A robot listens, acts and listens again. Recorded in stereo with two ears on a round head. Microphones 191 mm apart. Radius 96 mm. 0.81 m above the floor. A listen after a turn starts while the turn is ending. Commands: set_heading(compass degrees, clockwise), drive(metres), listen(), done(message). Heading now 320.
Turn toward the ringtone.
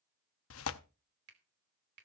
listen()
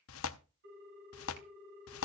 set_heading(15)
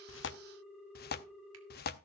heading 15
done("Found it: a ringtone, straight ahead.")